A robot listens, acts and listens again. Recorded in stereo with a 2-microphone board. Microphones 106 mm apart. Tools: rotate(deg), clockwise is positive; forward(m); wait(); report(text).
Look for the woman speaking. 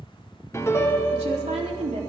rotate(90)
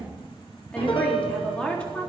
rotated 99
rotate(-10)
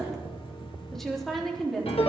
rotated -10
report("Facing the woman speaking.")